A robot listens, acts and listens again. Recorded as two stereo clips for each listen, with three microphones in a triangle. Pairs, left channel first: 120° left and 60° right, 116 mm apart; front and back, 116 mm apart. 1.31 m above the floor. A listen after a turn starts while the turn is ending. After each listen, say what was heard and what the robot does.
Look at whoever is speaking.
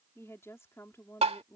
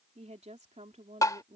The woman speaking: 175° right. Turn 175° right.
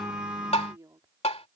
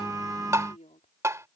Facing the woman speaking.